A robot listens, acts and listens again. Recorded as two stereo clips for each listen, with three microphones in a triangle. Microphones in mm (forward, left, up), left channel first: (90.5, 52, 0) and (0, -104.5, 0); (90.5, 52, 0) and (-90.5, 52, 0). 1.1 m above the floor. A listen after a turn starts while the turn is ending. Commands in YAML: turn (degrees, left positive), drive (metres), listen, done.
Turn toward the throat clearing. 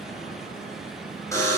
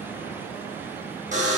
listen: true
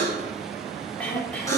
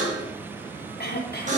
turn: -20
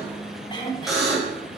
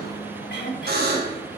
done: "Found it: throat clearing, straight ahead."